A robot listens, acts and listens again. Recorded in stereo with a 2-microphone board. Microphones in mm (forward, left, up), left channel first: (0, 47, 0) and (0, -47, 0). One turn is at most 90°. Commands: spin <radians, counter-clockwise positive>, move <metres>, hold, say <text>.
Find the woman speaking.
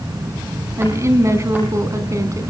spin -0.61
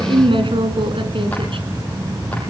spin -1.57
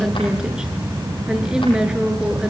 spin -0.17
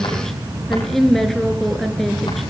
say Facing the woman speaking.